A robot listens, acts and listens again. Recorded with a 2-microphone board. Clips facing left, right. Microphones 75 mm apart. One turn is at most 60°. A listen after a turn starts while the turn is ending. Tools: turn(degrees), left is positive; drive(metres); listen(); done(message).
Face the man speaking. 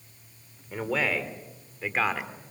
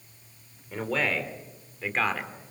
turn(degrees=30)
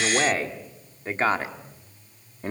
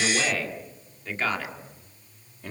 turn(degrees=60)
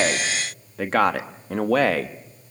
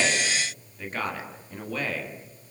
turn(degrees=60)
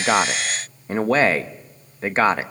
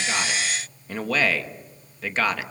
turn(degrees=30)
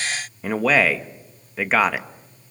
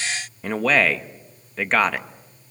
done("Found it: a man speaking, straight ahead.")